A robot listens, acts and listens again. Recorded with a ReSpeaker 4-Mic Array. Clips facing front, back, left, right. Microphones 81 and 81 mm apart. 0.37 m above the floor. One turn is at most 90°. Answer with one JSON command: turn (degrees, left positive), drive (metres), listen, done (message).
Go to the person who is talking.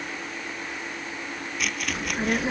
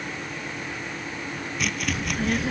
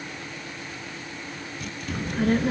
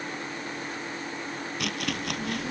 {"turn": 60}
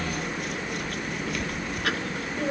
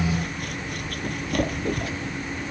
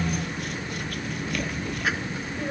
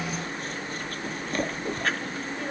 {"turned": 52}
{"turn": 10}
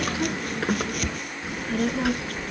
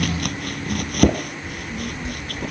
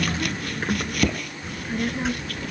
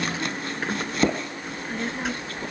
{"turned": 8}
{"drive": 1.0}
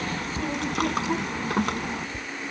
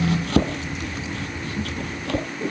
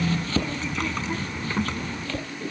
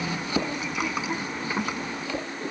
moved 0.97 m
{"turn": -10}
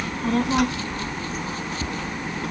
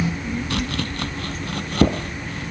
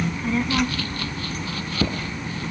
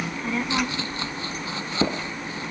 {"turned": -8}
{"drive": 1.0}
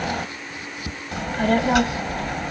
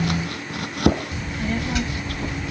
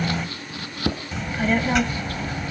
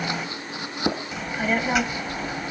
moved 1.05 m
{"drive": 1.0}
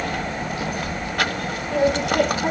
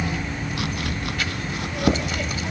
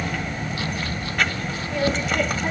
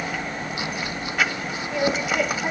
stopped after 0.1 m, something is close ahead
{"turn": -10}
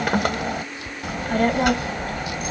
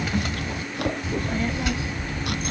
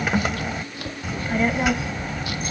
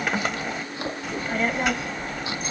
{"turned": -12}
{"done": "Arrived at the child speaking, straight ahead."}